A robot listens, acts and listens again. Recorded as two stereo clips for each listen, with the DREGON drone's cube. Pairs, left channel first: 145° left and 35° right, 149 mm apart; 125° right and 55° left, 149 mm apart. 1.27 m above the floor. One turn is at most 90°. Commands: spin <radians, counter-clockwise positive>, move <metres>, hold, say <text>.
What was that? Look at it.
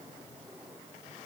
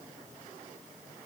hold
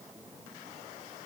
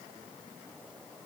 hold
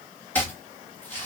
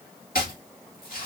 spin -1.57
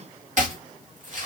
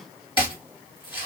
spin -1.22
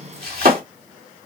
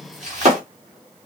spin 0.26
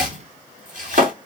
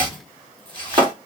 say Found it: chopping, straight ahead.